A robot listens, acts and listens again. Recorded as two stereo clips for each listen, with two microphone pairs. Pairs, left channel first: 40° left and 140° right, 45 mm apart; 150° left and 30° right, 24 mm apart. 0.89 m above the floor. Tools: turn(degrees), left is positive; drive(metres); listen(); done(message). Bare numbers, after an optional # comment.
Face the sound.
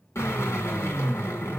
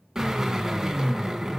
# The drill: 45° left.
turn(45)
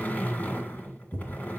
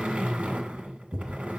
# The drill is now 10° right.
turn(-10)
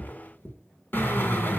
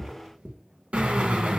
done("Facing the drill.")